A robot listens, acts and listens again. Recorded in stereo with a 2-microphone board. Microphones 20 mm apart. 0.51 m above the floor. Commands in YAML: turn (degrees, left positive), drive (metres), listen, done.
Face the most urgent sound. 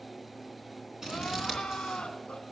turn: 50
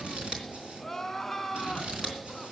done: "Facing the crying."